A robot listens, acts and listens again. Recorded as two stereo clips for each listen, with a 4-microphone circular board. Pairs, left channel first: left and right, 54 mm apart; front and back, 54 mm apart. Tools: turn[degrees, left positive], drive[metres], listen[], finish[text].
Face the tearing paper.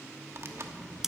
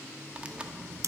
Thought: The tearing paper: 115° right.
Action: turn[-115]
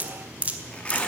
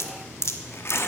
Thought: The tearing paper is now 25° left.
Action: turn[25]
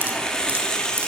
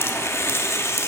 Thought: The tearing paper is now 15° left.
Action: turn[15]
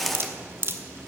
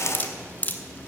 Action: finish[Found it: tearing paper, straight ahead.]